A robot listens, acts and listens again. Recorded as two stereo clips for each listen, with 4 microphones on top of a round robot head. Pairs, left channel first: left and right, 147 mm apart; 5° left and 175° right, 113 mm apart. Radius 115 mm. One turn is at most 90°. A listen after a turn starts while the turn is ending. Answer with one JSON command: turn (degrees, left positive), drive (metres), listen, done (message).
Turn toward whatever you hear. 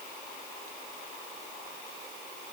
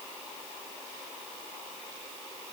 {"listen": true}
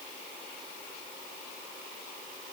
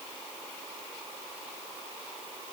{"listen": true}
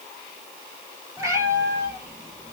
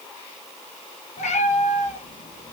{"turn": -25}
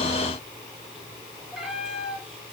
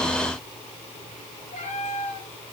{"done": "Found it: a cat meowing, straight ahead."}